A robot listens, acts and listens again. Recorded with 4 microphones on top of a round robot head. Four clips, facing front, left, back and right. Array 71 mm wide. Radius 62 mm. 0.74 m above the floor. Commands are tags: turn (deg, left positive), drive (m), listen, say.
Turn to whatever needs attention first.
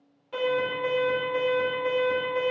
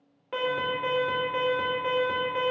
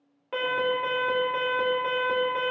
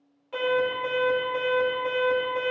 <turn deg="140"/>
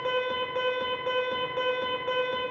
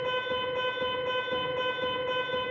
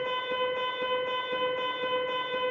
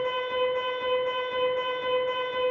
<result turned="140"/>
<turn deg="10"/>
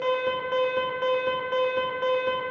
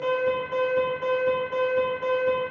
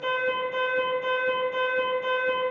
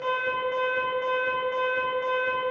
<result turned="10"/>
<say>Facing the alarm.</say>